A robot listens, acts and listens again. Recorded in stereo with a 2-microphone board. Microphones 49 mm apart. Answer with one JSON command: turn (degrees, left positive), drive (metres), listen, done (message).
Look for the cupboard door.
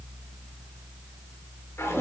{"listen": true}
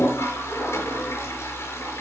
{"listen": true}
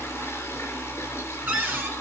{"turn": -45}
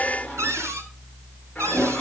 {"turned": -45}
{"turn": -90}
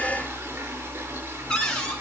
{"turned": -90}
{"turn": 10}
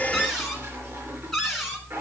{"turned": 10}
{"done": "Found it: a cupboard door, straight ahead, over 4 m away."}